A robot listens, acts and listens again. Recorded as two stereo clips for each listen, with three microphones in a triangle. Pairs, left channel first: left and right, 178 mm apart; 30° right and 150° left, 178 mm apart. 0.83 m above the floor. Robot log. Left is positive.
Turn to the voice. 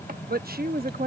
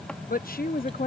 note: The woman speaking: 60° right.
cmd yaw -60
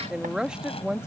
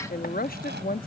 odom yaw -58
end: Found it: a woman speaking, straight ahead.